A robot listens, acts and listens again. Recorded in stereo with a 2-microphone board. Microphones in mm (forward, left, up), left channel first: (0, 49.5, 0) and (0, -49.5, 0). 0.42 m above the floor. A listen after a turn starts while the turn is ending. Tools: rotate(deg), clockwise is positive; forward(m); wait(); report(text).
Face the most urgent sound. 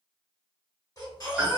rotate(-40)
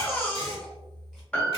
report("Found it: a baby crying, straight ahead.")